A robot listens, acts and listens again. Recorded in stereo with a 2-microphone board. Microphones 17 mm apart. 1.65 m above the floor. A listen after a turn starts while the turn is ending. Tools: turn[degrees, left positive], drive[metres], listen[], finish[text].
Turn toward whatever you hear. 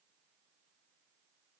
Action: listen[]
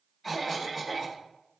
Action: turn[30]
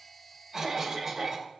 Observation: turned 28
Thought: So it is at 15° right.
Action: turn[-15]
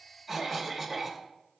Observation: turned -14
Action: finish[Facing the cough.]